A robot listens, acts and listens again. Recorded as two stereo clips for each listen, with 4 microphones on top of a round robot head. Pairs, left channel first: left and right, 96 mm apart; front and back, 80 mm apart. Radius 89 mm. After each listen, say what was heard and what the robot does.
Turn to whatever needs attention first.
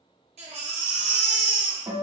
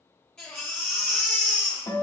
The baby crying: 85° right. Turn 85° right.
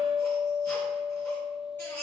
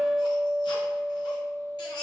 The baby crying is now 15° left. Turn 15° left.
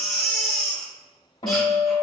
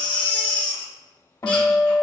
Found it: a baby crying, straight ahead, 1 to 2 m away.